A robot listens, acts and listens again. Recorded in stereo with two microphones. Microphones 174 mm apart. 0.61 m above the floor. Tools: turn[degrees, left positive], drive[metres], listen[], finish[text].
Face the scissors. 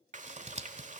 Thought: The scissors: about 40° right or 140° right.
Action: turn[-40]
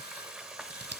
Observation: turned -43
Thought: So it is at 100° right.
Action: turn[-100]
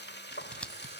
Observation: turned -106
Action: finish[Facing the scissors, 1 to 2 m away.]